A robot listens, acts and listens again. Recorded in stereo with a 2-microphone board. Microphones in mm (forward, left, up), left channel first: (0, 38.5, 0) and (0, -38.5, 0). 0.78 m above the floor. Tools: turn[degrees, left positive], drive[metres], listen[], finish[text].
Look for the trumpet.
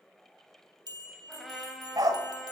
Action: turn[30]
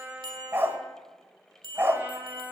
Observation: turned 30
Thought: So it is at 25° right.
Action: turn[-25]
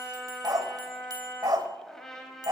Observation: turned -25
Action: finish[Facing the trumpet.]